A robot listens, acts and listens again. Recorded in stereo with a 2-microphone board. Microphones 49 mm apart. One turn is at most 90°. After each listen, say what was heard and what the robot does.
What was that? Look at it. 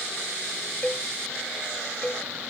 The cowbell: about 25° left or 155° left. Turn 25° left.
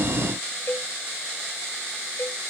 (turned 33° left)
So it is at 120° left. Turn 90° left.
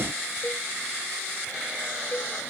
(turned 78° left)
The cowbell is now 45° left. Turn 45° left.
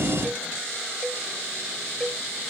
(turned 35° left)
The cowbell is now 10° left. Turn 10° left.
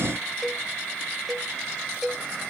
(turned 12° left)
Found it: a cowbell, straight ahead.